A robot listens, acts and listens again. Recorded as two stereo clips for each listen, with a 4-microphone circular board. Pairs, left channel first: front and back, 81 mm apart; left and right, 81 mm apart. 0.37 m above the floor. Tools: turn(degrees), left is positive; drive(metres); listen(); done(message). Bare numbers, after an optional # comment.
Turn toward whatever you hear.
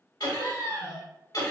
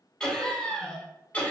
# The laughter: 25° left.
turn(25)
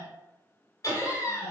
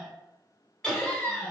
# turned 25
# The laughter is now 25° left.
turn(25)
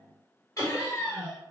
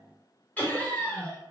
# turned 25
# The laughter is now 35° left.
turn(35)
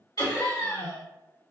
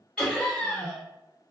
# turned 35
# The laughter is now 20° left.
turn(20)
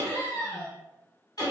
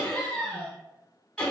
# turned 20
# The laughter is now 10° left.
turn(10)
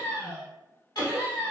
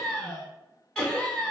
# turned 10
done("Found it: laughter, straight ahead.")